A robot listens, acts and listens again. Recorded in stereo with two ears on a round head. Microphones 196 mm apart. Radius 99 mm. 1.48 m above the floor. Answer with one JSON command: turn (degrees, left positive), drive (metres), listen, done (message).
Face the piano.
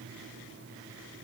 {"listen": true}
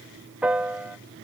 {"turn": -30}
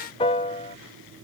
{"turn": 25}
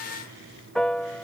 {"done": "Found it: a piano, straight ahead."}